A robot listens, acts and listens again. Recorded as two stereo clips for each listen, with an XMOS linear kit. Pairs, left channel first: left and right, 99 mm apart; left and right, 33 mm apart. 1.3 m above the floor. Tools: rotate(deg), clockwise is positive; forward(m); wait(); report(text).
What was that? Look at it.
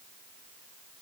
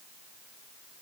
wait()
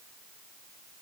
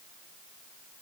wait()
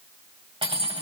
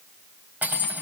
rotate(70)
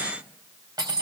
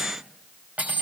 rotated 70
rotate(40)
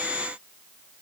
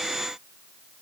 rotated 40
wait()
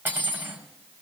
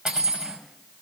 rotate(20)
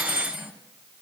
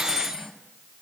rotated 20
report("Found it: cutlery clinking, straight ahead, over 4 m away.")